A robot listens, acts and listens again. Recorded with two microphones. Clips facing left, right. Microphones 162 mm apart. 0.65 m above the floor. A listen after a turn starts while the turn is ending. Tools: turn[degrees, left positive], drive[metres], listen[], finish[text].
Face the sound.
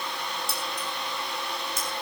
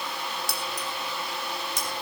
Action: turn[-90]
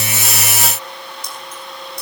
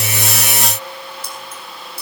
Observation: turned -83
Action: finish[Found it: keys jangling, straight ahead.]